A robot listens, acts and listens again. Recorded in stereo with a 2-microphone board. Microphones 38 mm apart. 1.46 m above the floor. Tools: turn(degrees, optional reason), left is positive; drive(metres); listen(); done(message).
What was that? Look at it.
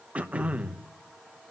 turn(degrees=-40, reason="The throat clearing: about 40° right or 140° right.")
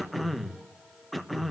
done("Facing the throat clearing.")